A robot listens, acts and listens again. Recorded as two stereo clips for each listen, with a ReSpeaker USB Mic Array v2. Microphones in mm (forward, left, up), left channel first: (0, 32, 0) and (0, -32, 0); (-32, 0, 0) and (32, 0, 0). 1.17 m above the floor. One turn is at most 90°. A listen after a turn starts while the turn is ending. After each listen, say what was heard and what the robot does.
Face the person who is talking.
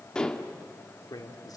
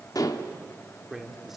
The man speaking: 85° left. Turn 85° left.
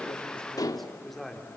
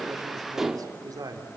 Facing the man speaking.